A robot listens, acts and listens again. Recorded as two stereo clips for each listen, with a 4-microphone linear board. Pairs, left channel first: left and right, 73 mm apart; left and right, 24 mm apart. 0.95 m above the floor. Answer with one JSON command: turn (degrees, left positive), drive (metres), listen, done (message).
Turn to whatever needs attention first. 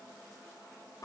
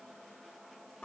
{"listen": true}
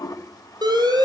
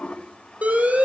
{"turn": -90}
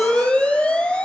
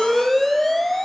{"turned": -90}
{"turn": 15}
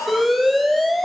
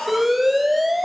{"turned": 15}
{"done": "Facing the alarm."}